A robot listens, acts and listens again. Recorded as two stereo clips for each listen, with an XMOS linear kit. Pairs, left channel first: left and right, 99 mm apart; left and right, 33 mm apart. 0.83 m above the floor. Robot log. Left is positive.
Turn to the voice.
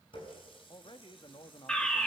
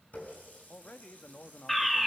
note: The man speaking: about 50° left or 130° left.
cmd yaw +50
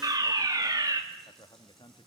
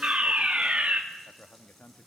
note: So it is at 65° left.
cmd yaw +65
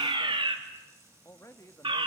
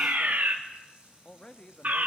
note: The man speaking is now 35° left.
cmd yaw +35
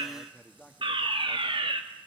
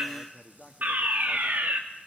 note: The man speaking is now 10° left.
cmd yaw +10
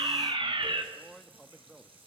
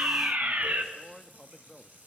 end: Found it: a man speaking, straight ahead.